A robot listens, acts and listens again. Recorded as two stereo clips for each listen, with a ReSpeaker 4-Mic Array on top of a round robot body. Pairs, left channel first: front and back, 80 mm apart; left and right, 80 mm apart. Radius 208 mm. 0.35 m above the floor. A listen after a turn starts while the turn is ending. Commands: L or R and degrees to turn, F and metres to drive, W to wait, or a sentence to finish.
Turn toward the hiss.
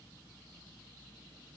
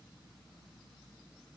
W
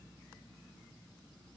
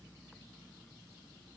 W
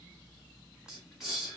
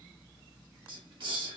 R95
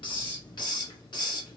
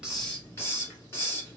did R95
L30
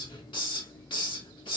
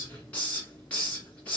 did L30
L20
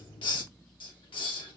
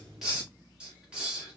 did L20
R10
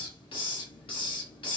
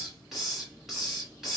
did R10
Facing the hiss.